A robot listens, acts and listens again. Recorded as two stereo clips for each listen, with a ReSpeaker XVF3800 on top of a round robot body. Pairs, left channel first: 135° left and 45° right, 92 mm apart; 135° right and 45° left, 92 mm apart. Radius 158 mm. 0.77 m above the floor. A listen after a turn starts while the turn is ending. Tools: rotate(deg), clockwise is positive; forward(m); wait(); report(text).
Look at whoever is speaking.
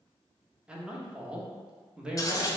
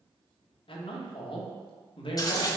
rotate(125)
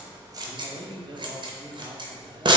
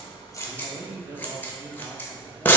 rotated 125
rotate(15)
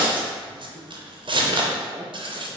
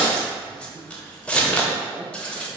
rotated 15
report("Found it: a man speaking, straight ahead.")